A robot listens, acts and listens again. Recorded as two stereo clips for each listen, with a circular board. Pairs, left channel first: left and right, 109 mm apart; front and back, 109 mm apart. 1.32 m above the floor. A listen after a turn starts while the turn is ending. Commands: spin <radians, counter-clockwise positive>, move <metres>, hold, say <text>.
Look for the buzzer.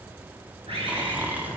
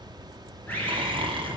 hold
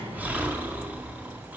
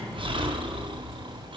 hold
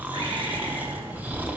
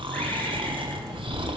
say I can't make out a buzzer, only a bird and snoring.